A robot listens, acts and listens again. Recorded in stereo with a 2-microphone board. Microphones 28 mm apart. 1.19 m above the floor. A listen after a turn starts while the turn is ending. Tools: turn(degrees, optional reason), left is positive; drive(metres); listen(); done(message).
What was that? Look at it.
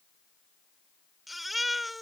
turn(degrees=30)
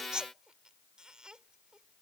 turn(degrees=-30, reason="So it is at 30° right.")
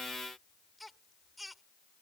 done("Facing the baby crying.")